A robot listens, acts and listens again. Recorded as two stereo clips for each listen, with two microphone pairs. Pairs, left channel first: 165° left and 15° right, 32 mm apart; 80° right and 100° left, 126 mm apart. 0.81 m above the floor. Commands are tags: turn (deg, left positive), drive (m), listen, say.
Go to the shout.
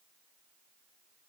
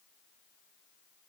<listen/>
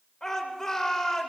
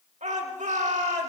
<turn deg="95"/>
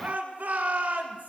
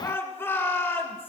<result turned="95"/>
<turn deg="-10"/>
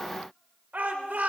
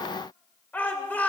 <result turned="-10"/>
<drive m="1.0"/>
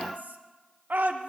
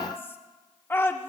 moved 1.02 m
<turn deg="-10"/>
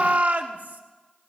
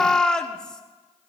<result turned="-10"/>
<drive m="1.0"/>
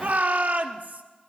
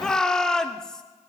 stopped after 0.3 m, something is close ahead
<say>I am next to the shout.</say>